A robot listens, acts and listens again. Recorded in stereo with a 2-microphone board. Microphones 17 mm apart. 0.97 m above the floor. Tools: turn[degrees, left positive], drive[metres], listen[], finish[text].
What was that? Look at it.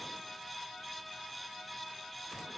Action: listen[]
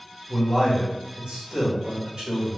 Thought: The man speaking: about 60° right or 120° right.
Action: turn[-60]
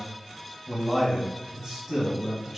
Thought: So it is at 30° right.
Action: turn[-30]
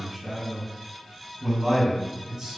Thought: The man speaking is now 20° right.
Action: turn[-20]
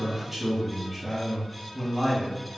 Action: finish[Facing the man speaking.]